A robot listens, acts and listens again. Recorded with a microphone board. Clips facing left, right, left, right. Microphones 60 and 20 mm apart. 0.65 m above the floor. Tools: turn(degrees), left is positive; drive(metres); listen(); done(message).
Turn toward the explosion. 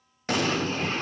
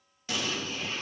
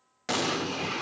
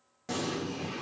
turn(degrees=50)
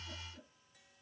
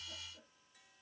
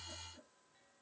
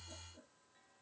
listen()
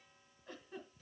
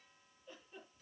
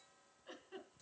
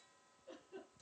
done("I heard an explosion, but can't make it out now. It was about straight ahead or 80° left.")